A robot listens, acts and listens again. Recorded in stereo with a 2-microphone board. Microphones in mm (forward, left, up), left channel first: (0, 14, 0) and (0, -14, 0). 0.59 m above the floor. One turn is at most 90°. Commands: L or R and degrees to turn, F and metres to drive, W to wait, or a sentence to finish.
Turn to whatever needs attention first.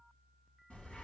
W
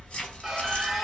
R30
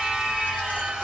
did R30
R90
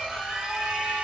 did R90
R35
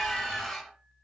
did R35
Facing the scream, 1 to 2 m away.